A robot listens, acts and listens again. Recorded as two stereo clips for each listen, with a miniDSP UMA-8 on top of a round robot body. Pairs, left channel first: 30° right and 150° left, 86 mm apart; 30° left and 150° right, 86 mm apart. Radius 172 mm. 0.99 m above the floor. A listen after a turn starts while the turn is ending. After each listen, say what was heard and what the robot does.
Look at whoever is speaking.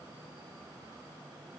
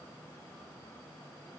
Keep listening.
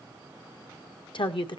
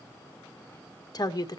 The woman speaking: 15° right. Turn 15° right.
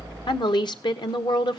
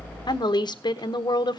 Facing the woman speaking.